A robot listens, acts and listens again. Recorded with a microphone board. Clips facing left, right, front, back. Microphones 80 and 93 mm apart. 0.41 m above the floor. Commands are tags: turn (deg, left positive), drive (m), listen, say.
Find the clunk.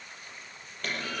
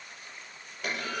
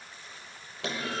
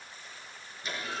<turn deg="-10"/>
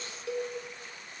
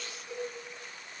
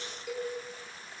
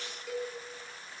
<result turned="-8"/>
<say>I heard a clunk from this way, but can't make it out now.</say>